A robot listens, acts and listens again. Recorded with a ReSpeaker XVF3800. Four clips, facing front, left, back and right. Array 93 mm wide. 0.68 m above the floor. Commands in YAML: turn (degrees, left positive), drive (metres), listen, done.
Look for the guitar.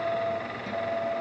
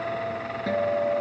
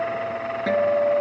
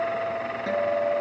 turn: -170
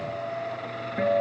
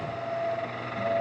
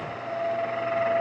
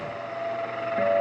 listen: true
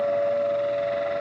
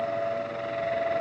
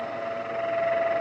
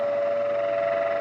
turn: -40
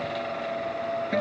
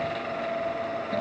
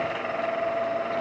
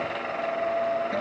listen: true
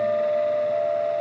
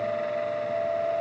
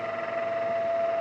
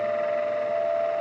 turn: -10
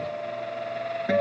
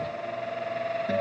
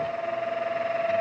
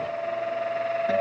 listen: true
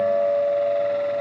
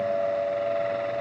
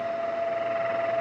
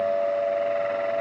done: "Found it: a guitar, straight ahead."